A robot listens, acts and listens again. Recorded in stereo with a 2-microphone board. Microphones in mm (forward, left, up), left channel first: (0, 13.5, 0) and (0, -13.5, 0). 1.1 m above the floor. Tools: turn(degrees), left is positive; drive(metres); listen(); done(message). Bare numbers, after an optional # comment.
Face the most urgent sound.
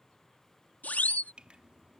# The siren: about 70° left or 110° left.
turn(70)
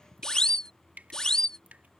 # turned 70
# So it is at 30° left.
turn(30)
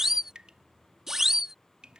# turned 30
# The siren is now 10° right.
turn(-10)
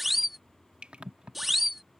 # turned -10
done("Facing the siren.")